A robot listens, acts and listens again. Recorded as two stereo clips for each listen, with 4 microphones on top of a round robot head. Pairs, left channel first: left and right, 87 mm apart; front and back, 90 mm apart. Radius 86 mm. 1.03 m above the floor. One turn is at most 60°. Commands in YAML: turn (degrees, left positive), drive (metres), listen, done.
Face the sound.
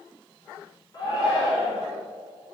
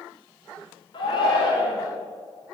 turn: 35
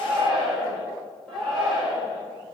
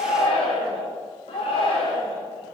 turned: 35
done: "Found it: a shout, straight ahead, over 4 m away."